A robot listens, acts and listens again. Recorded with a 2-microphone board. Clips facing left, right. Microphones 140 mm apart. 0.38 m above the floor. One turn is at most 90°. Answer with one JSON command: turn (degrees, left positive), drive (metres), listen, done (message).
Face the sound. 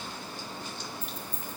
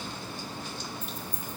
{"turn": 25}
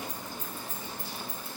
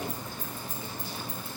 {"turn": -20}
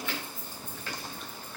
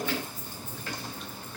{"turn": -25}
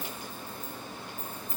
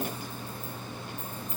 {"turn": -20}
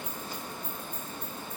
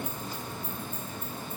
{"listen": true}
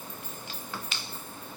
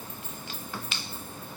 {"done": "Facing the keys jangling, 2 to 4 m away."}